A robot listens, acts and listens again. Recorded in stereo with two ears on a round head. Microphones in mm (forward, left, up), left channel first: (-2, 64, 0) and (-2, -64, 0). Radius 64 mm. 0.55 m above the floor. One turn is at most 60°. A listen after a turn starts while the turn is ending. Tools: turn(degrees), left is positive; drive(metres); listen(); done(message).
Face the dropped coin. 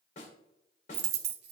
turn(degrees=-60)
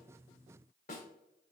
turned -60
turn(degrees=-30)
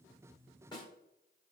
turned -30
done("I heard a dropped coin from this way, but can't make it out now.")